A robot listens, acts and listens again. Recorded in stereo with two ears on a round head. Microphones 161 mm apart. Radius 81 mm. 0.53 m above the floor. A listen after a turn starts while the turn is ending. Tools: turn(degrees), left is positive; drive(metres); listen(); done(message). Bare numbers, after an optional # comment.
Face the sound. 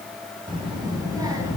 # The child speaking: about 20° right or 160° right.
turn(-20)
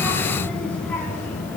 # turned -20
# So it is at 15° left.
turn(15)
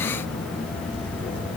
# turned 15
# The child speaking is now 10° left.
turn(10)
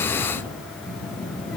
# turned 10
done("Facing the child speaking.")